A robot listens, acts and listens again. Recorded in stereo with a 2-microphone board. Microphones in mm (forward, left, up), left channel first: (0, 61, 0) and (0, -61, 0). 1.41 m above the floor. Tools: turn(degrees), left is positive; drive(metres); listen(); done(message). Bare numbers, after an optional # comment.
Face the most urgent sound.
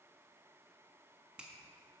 listen()
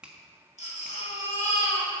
turn(90)
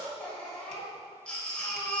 # So it is at 10° left.
turn(10)
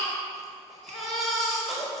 done("Facing the baby crying.")